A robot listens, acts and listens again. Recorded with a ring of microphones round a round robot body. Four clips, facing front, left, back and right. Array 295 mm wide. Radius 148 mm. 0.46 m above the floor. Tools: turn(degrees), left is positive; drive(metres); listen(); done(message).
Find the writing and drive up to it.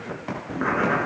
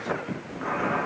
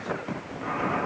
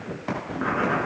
turn(degrees=-25)
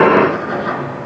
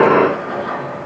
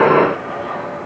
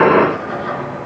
drive(metres=1.0)
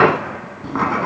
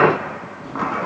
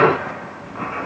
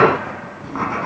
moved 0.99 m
drive(metres=1.0)
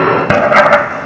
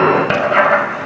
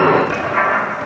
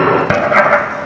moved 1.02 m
turn(degrees=-10)
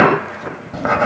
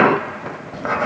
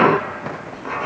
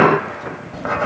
drive(metres=1.0)
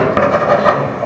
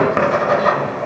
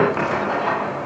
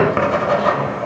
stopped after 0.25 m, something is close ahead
done("Arrived at the writing, straight ahead.")